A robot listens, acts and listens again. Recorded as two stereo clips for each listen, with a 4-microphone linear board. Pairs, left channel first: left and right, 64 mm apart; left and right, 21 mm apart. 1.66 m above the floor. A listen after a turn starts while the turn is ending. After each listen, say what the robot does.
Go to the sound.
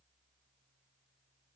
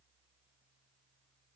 Keep listening.
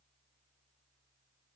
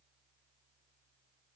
Keep listening.
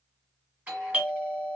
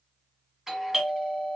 Turn 25° right.
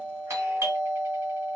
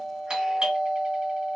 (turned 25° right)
Turn 130° right.
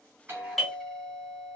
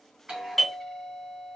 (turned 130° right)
Drive 1.0 m forward.
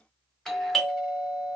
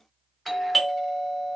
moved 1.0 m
Turn 10° left.
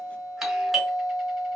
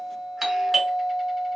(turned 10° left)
Drive 1.0 m forward.
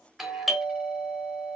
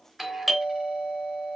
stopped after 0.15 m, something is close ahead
Arrived at the doorbell, straight ahead.